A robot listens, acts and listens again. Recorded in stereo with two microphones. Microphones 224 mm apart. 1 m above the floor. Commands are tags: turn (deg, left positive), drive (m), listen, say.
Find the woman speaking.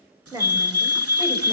<turn deg="-15"/>
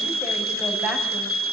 <turn deg="-30"/>
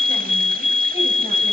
<listen/>
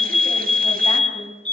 <listen/>
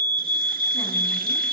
<say>I heard a woman speaking, but can't make it out now. It was about 25° left or 145° right.</say>